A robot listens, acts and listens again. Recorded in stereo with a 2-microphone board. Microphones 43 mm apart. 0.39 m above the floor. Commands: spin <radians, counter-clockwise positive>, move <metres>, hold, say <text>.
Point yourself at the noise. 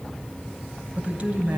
spin -0.61
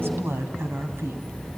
spin -2.01
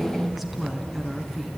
say Found it: a woman speaking, straight ahead.